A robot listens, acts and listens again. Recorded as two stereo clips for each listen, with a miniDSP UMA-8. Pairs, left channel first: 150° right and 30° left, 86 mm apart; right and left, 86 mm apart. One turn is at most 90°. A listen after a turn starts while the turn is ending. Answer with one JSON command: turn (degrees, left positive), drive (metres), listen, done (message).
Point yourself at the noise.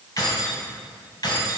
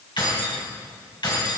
{"turn": -90}
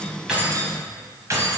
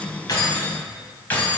{"turn": -25}
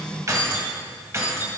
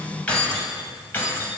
{"turn": -25}
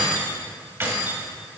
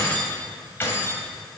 {"turn": -30}
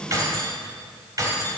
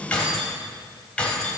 {"turn": -10}
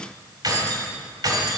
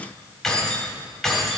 {"done": "Facing the keys jangling."}